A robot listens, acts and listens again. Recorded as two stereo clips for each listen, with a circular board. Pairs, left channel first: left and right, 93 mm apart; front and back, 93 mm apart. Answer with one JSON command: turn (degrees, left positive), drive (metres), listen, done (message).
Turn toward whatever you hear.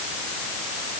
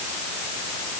{"listen": true}
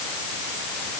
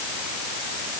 {"listen": true}
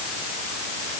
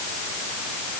{"done": "I can't make out anything."}